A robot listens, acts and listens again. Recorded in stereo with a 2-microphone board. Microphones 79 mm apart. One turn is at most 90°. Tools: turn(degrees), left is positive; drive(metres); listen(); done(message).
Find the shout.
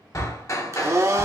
turn(degrees=65)
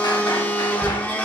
listen()
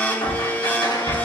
turn(degrees=10)
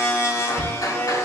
listen()
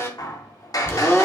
listen()
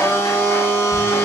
done("Facing where the shout came from. I can't hear it now.")